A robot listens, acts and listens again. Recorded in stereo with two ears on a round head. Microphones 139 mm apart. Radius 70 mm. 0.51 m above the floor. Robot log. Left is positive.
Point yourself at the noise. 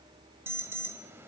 note: The alarm: about 15° right or 165° right.
cmd yaw -15
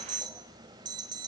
note: So it is at 150° right.
cmd yaw -150
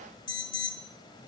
note: The alarm is now 30° left.
cmd yaw +30
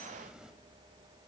cmd idle
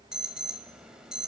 end: Found it: an alarm, straight ahead, 1 to 2 m away.